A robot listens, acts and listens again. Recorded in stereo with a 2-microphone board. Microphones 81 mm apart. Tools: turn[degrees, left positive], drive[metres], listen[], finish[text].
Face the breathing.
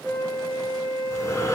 Thought: The breathing: about 35° left or 145° left.
Action: turn[35]
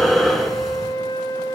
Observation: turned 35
Action: finish[Found it: breathing, straight ahead.]